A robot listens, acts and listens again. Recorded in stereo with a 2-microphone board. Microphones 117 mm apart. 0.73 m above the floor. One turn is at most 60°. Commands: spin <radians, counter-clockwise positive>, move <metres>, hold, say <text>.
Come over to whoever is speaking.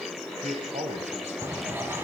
spin -1.05
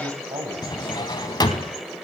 spin -0.79
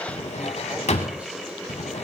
hold
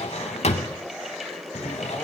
hold
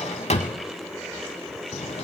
say I heard a man speaking from this way, but can't make it out now. I did not reach it.